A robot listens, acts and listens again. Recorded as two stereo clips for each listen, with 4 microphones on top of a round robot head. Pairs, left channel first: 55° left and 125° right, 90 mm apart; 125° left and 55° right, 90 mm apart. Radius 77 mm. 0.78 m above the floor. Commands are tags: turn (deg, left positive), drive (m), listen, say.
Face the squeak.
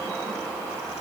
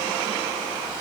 <listen/>
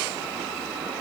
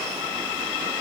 <listen/>
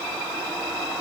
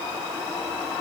<say>I can't make out a squeak.</say>